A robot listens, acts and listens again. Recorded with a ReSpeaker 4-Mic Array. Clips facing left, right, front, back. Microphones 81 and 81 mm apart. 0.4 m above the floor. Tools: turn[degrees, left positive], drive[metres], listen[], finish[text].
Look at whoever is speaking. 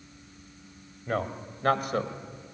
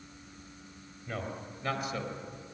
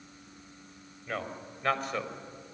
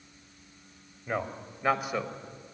Thought: The man speaking: 100° left.
Action: turn[100]
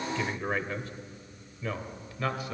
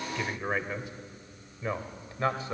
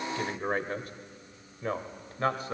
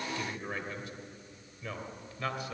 Thought: The man speaking is now 40° right.
Action: turn[-40]
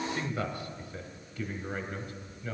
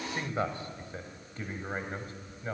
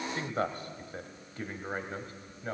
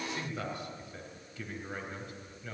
Thought: The man speaking is now 40° right.
Action: turn[-40]
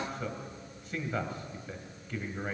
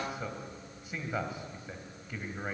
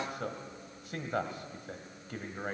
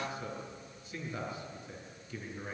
Thought: The man speaking is now 10° right.
Action: turn[-10]
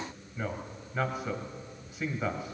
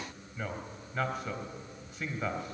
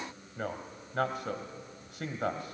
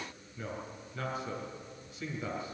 Action: finish[Facing the man speaking, 2 to 4 m away.]